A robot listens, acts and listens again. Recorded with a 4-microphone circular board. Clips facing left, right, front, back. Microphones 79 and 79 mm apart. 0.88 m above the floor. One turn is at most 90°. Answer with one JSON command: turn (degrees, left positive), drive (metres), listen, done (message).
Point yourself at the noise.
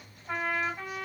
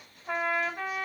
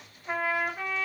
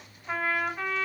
{"turn": -75}
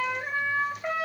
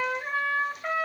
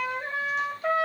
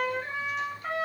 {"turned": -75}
{"done": "Facing the trumpet, 2 to 4 m away."}